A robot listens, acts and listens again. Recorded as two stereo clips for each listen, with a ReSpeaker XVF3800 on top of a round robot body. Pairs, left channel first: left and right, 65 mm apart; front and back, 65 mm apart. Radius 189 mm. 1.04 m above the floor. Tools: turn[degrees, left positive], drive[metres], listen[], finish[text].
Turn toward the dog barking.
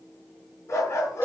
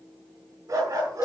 Thought: The dog barking: 140° left.
Action: turn[140]
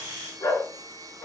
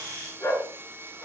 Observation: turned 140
Thought: The dog barking is now 45° left.
Action: turn[45]
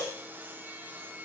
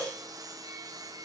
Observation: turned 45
Action: listen[]
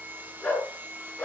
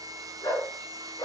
Thought: The dog barking is now 15° left.
Action: turn[15]
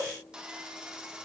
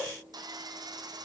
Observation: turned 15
Action: listen[]
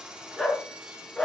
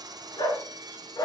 Action: finish[Facing the dog barking, over 4 m away.]